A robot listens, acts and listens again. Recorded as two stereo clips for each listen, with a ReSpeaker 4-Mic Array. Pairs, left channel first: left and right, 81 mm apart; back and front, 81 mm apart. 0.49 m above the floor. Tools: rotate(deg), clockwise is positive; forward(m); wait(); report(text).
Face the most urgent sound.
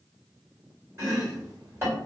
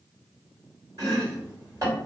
wait()
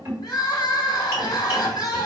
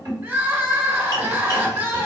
rotate(-55)
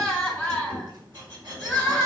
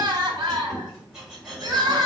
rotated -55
rotate(-10)
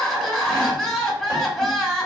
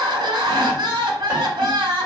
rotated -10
report("Facing the crying, under 1 m away.")